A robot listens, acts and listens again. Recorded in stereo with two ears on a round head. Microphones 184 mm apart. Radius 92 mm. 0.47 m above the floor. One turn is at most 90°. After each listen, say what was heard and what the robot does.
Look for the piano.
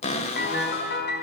The piano: about 55° left or 125° left. Turn 55° left.
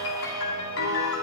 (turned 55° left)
So it is at 70° left. Turn 70° left.
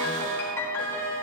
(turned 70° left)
The piano is now 10° left. Turn 10° left.
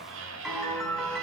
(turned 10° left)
Facing the piano.